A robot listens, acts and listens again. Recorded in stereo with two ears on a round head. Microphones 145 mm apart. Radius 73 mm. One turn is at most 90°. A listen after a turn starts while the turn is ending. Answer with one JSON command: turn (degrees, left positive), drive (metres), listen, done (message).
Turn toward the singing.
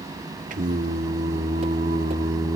{"turn": -25}
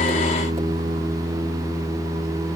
{"turn": -20}
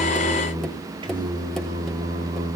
{"turn": -25}
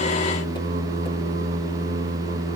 {"turn": -90}
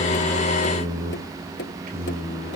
{"turn": -55}
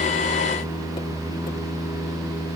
{"done": "Facing the singing."}